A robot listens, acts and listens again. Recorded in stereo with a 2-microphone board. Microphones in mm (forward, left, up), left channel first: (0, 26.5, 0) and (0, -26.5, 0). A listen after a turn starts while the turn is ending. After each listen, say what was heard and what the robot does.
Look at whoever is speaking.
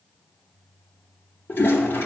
Keep listening.
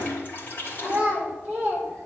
The child speaking: about 25° right or 155° right. Turn 25° right.
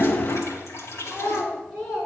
Facing the child speaking.